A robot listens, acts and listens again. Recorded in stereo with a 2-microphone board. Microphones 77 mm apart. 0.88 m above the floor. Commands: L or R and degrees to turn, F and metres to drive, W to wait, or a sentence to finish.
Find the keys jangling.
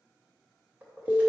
R20
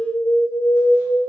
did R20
W
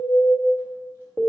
W
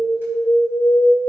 I heard keys jangling, but can't make it out now. It was about straight ahead or 140° right.